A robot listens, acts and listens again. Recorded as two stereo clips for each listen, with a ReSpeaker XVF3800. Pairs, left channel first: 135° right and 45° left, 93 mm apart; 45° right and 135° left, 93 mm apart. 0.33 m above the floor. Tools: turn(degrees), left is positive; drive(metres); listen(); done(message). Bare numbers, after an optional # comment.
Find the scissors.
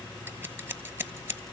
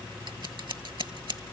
# The scissors: 110° left.
turn(110)
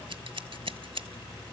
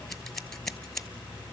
# The scissors is now 40° left.
turn(40)
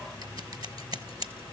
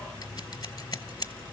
done("Facing the scissors.")